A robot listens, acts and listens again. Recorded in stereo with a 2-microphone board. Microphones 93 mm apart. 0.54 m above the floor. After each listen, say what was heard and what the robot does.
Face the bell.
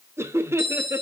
The bell: about 50° left or 130° left. Turn 50° left.
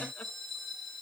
Found it: a bell, straight ahead, 1 to 2 m away.